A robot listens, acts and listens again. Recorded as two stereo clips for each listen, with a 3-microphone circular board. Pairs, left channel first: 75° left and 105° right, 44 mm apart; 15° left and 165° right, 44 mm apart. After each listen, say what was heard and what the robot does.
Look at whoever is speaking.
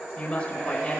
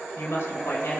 The woman speaking: 15° left. Turn 15° left.
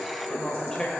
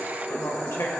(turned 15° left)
Facing the woman speaking.